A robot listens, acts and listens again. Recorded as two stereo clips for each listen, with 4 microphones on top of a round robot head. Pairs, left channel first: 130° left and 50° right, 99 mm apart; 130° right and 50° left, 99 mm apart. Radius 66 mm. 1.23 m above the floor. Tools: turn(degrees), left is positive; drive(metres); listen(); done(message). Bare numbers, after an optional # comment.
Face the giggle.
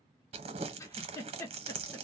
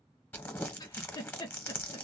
# The giggle: 170° right.
turn(-170)
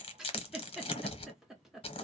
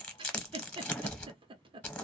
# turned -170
# The giggle is now 35° left.
turn(35)
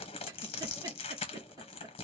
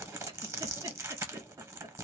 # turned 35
listen()
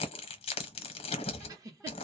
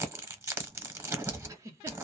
done("Facing the giggle, under 1 m away.")